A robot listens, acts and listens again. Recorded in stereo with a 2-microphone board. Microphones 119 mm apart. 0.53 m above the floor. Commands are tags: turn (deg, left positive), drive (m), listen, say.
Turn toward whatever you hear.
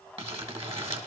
<turn deg="-55"/>
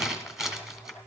<say>Facing the crumpling, 1 to 2 m away.</say>